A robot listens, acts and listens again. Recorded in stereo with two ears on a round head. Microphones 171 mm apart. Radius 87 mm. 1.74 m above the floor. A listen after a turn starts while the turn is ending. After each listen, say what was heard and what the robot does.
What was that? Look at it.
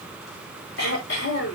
The throat clearing: about 60° left or 120° left. Turn 60° left.
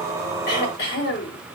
So it is at 60° left. Turn 60° left.
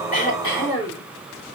The throat clearing is now 25° left. Turn 25° left.
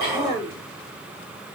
The throat clearing is now 25° left. Turn 25° left.
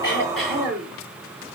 Facing the throat clearing.